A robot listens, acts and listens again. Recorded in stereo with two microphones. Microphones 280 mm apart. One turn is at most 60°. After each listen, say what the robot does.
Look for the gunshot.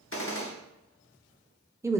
Turn 45° left.
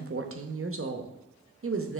Keep listening.
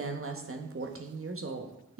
I heard a gunshot, but can't make it out now. It was about straight ahead or 90° left.